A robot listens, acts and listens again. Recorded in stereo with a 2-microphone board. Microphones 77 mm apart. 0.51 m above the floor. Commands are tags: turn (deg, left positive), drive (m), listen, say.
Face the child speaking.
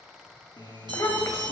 <turn deg="40"/>
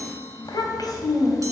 <turn deg="130"/>
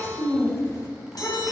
<turn deg="45"/>
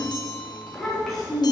<say>Found it: a child speaking, straight ahead, 2 to 4 m away.</say>